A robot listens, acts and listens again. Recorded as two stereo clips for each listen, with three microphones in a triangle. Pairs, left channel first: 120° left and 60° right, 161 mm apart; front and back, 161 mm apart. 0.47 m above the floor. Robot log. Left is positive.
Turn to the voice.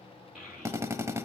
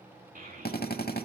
note: The child speaking: 150° right.
cmd yaw -150
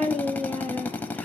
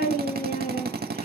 note: The child speaking is now 35° left.
cmd yaw +35
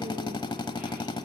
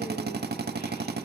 cmd idle
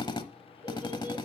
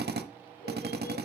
cmd idle
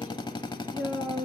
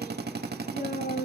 note: The child speaking is now 15° left.
cmd yaw +15
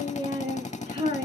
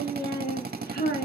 end: Found it: a child speaking, straight ahead, over 4 m away.